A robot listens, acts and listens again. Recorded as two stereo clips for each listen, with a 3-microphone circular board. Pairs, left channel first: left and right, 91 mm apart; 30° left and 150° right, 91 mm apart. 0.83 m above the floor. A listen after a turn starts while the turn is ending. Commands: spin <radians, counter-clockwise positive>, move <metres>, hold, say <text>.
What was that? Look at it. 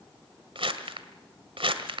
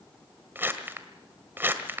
spin -1.40
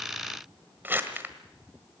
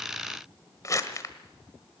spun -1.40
spin -0.44
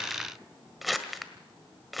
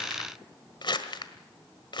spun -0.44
say Facing the crumpling.